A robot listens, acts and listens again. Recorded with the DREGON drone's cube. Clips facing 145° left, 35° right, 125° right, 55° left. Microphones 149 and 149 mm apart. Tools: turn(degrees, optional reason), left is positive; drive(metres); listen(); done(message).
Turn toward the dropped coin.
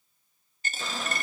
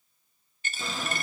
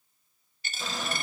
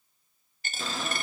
turn(degrees=95, reason="The dropped coin: 95° left.")
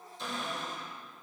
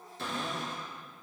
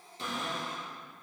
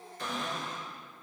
done("Facing where the dropped coin came from. I can't hear it now.")